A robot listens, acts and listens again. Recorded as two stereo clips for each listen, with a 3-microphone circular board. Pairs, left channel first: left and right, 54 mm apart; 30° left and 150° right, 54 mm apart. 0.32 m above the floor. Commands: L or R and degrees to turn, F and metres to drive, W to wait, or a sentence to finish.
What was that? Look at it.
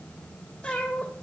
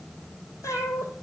L15
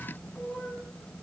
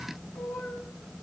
Found it: a cat meowing, straight ahead.